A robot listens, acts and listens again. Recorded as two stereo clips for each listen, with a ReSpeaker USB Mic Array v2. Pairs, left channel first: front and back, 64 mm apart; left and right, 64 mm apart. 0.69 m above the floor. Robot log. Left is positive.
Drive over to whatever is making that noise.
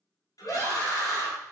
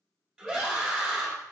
cmd fwd 1.0
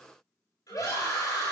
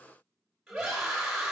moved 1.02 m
cmd fwd 1.0
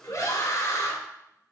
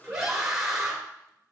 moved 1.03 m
cmd fwd 1.0
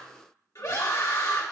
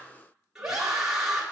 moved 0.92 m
note: The scream is now 10° right.
cmd yaw -10
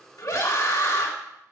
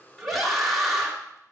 cmd fwd 1.0
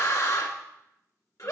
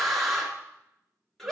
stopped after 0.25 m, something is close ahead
end: I am next to the scream.